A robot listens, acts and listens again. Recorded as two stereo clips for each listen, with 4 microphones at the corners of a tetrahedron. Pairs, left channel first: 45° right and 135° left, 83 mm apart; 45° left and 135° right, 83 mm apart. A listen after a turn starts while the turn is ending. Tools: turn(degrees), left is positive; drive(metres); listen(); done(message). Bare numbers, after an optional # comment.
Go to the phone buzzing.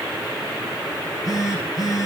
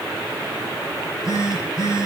drive(1.0)
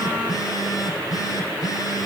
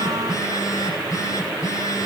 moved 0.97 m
drive(1.0)
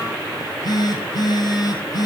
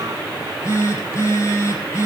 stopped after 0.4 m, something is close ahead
# The phone buzzing is now 10° right.
turn(-10)
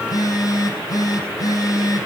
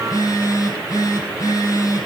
done("Something is in my way. I am facing the phone buzzing but have not reached it.")